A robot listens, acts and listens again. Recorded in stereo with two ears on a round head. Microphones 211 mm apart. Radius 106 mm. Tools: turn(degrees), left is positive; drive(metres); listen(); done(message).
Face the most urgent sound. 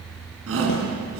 turn(degrees=-60)
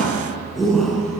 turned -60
done("Found it: a shout, straight ahead, over 4 m away.")